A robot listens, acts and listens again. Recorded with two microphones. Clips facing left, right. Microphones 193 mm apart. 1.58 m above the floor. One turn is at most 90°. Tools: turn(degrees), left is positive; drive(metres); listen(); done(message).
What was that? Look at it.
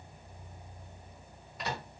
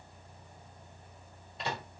turn(degrees=-25)
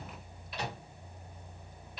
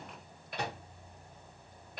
turn(degrees=-90)
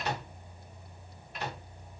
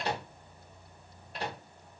turn(degrees=-35)
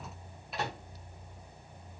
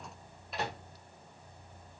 done("Found it: a microwave, straight ahead, 1 to 2 m away.")